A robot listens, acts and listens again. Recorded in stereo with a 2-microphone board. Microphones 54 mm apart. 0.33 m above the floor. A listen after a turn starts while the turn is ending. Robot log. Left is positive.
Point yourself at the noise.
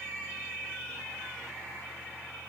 cmd idle
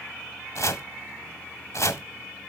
note: The chopping: about 60° left or 120° left.
cmd yaw +60
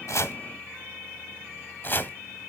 note: So it is at 45° left.
cmd yaw +45
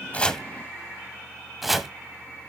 end: Found it: chopping, straight ahead.